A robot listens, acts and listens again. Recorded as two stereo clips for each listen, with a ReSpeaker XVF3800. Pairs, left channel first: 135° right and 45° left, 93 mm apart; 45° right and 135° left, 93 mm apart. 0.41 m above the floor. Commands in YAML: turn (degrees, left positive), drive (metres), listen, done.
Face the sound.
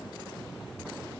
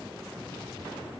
listen: true
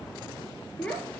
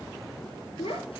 turn: -60
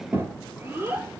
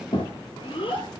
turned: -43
turn: -20
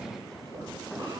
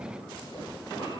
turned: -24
listen: true
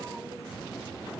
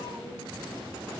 listen: true
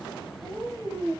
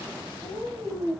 done: "Facing the child speaking."